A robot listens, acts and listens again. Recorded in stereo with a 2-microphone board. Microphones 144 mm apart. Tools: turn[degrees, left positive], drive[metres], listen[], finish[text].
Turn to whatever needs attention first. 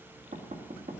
Action: listen[]
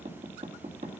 Action: listen[]
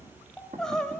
Action: turn[30]
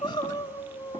Thought: So it is at 145° left.
Action: turn[145]
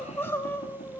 Thought: The crying is now 20° left.
Action: turn[20]
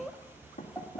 Action: finish[Found it: crying, straight ahead.]